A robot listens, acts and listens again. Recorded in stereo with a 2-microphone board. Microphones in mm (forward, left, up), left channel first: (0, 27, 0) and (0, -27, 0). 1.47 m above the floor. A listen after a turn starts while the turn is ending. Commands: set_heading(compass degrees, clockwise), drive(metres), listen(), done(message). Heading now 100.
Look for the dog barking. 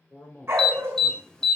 set_heading(150)
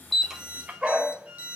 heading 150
set_heading(170)
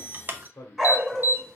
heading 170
done("Facing the dog barking, 1 to 2 m away.")